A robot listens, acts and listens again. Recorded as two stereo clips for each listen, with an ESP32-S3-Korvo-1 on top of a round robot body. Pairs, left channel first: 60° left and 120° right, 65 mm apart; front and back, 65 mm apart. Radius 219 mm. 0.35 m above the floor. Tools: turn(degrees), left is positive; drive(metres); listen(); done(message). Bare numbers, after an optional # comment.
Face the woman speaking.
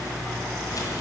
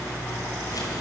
listen()
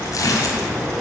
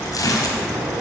listen()
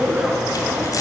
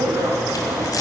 done("I can't make out a woman speaking to turn to.")